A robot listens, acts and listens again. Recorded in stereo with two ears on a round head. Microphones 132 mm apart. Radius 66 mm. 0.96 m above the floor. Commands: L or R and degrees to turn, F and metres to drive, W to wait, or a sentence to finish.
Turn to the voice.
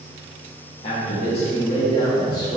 L30
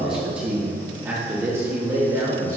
R25
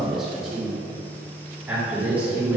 R10
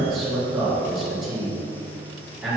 Facing the man speaking, 2 to 4 m away.